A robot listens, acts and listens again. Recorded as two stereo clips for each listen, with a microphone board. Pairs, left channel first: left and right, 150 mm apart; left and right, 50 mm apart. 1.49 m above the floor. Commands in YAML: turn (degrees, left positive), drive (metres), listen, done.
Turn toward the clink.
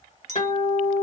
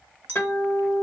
turn: -50
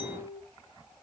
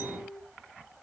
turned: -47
listen: true
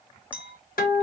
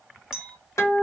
turn: -10
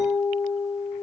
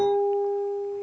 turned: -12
listen: true
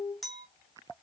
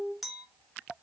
done: "Found it: a clink, straight ahead, 1 to 2 m away."